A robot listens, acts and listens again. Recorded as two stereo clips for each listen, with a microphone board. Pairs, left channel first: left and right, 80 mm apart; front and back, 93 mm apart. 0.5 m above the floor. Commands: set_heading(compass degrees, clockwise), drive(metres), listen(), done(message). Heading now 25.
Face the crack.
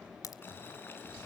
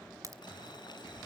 set_heading(255)
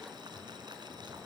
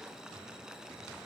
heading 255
done("Facing where the crack came from. I can't hear it now.")